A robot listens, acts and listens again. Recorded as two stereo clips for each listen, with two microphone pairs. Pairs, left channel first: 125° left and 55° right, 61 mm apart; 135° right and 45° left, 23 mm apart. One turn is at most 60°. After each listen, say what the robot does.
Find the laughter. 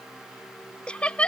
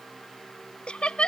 Turn 60° right.
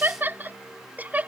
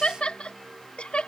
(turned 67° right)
Turn 60° right.
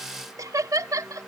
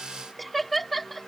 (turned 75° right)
Turn 55° right.
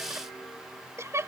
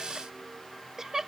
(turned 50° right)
Turn 20° right.
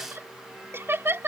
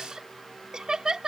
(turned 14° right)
Turn 10° right.
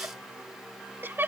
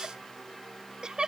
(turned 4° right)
Facing the laughter.